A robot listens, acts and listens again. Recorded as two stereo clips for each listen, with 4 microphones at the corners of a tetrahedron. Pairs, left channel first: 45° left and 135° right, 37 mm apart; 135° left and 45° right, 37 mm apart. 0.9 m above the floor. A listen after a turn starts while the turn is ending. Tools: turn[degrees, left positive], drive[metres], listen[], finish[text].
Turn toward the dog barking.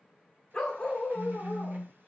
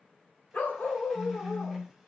Thought: The dog barking: 120° left.
Action: turn[120]
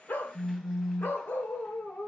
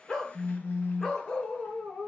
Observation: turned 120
Thought: The dog barking is now 75° left.
Action: turn[75]
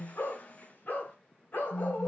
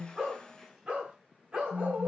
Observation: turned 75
Thought: The dog barking is now 10° left.
Action: turn[10]
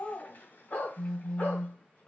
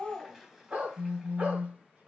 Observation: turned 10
Action: finish[Found it: a dog barking, straight ahead, 2 to 4 m away.]